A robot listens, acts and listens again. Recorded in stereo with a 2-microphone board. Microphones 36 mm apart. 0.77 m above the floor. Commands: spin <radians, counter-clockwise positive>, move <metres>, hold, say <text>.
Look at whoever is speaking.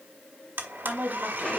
spin -0.87
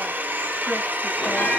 hold
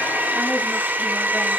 hold
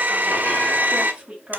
spin -0.44
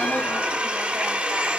hold
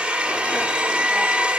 hold
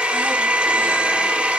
say Facing where the woman speaking came from. I can't hear it now.